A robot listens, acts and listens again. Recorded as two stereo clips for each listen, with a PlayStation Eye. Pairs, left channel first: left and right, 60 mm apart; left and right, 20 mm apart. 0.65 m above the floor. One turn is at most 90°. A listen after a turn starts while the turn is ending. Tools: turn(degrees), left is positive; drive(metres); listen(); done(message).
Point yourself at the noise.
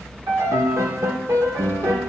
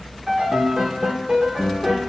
turn(degrees=-65)
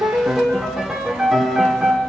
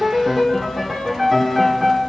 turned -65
turn(degrees=-10)
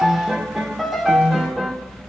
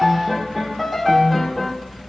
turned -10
done("Facing the piano, 1 to 2 m away.")